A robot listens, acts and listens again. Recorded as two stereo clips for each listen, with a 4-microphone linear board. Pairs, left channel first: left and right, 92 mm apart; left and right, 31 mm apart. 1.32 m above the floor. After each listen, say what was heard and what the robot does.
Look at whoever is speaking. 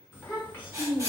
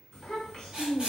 The child speaking: about 20° left or 160° left. Turn 20° left.
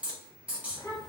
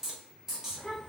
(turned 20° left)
So it is at 140° left. Turn 140° left.
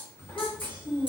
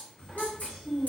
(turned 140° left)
The child speaking is now 25° left. Turn 25° left.
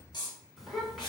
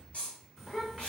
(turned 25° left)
Facing the child speaking, 1 to 2 m away.